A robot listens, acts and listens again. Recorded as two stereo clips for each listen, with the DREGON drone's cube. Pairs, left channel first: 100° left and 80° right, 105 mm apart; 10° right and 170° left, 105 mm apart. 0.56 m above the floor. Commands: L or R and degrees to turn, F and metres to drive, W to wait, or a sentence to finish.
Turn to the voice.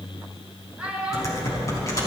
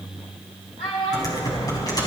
Facing the child speaking, over 4 m away.